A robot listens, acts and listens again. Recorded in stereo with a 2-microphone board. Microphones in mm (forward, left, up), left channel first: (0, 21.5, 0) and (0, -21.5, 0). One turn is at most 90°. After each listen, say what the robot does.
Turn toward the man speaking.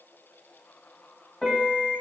Keep listening.
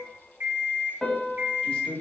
Turn 25° left.
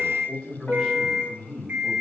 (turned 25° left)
Turn 30° left.
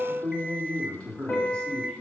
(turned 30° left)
Turn 25° left.
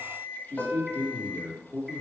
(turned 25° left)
Turn 90° left.
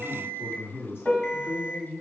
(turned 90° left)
Turn 50° left.
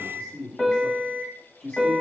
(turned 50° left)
Turn 35° left.
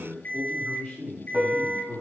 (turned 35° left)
Turn 10° left.
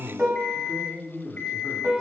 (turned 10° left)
Found it: a man speaking, straight ahead, 2 to 4 m away.